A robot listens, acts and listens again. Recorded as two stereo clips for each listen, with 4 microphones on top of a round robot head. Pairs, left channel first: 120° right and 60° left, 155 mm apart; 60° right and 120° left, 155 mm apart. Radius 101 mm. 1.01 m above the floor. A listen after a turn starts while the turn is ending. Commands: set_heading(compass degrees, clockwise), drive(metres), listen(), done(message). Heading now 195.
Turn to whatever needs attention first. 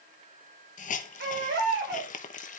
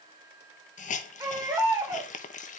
set_heading(145)
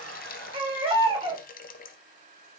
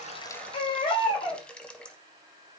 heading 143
done("Facing the baby crying, 2 to 4 m away.")